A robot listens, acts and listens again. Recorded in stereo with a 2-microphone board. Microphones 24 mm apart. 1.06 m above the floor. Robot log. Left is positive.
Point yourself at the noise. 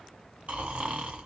note: The snoring: about 60° right or 120° right.
cmd yaw -60
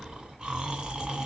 note: So it is at 45° right.
cmd yaw -45
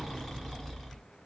note: The snoring is now 10° left.
cmd yaw +10
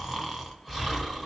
end: Facing the snoring.